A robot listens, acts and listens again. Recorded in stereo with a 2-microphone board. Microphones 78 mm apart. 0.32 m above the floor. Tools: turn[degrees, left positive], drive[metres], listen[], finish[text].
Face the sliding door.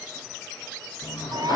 Thought: The sliding door: about 65° left or 115° left.
Action: turn[65]
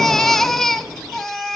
Action: finish[Facing the sliding door.]